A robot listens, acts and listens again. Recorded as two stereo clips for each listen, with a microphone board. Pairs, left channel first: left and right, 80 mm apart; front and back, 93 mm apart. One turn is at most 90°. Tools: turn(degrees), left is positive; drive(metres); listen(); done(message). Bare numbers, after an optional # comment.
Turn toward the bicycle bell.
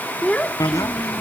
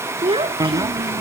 # The bicycle bell: 135° left.
turn(90)
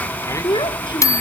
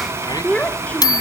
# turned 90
# The bicycle bell is now 45° left.
turn(45)
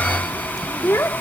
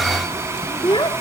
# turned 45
done("Found it: a bicycle bell, straight ahead.")